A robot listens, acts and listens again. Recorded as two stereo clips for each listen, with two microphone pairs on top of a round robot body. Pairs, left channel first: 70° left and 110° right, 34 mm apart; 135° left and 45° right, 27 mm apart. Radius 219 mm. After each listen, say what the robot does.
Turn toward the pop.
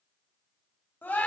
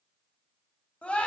Keep listening.
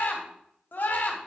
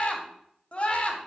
Keep listening.
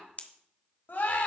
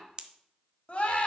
Turn 20° left.
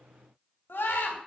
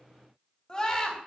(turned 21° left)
Facing where the pop came from. I can't hear it now.